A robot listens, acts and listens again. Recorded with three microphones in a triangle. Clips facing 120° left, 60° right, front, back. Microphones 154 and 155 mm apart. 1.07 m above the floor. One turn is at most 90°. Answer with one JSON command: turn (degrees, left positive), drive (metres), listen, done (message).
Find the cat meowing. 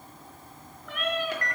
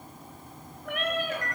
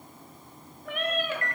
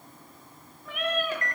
{"turn": -25}
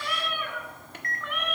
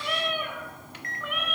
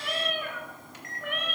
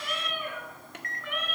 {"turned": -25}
{"turn": 25}
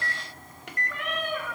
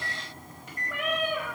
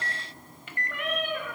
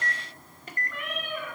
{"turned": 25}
{"turn": 20}
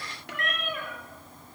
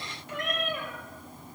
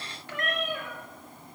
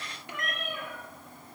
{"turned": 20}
{"turn": 10}
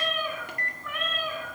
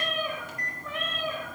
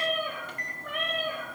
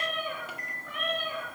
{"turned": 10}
{"done": "Facing the cat meowing, 2 to 4 m away."}